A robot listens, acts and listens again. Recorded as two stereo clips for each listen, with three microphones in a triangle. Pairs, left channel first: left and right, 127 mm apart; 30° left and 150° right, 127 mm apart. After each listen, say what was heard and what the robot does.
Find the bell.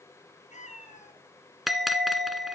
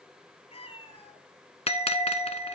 Found it: a bell, straight ahead.